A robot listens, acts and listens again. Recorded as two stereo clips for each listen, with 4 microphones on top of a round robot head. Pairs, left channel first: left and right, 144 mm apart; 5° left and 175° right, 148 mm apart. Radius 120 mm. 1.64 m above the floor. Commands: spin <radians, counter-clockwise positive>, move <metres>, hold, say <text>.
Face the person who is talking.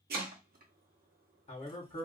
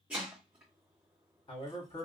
spin 0.96
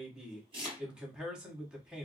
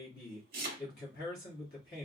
say Found it: a man speaking, straight ahead.